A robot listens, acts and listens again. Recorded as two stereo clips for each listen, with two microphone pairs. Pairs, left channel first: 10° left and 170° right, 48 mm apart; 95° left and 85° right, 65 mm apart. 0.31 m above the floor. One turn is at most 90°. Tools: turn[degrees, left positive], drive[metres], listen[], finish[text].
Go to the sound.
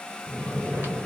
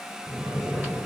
Thought: The snoring: 140° right.
Action: turn[-90]
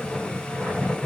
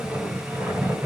Thought: The snoring is now 50° right.
Action: turn[-50]
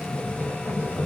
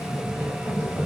Thought: The snoring is now 25° right.
Action: turn[-25]
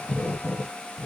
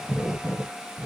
Thought: The snoring is now 15° right.
Action: turn[-15]
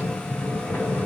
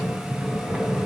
Action: drive[1.0]
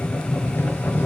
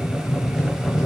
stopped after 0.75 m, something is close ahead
Action: finish[Arrived at the snoring, straight ahead.]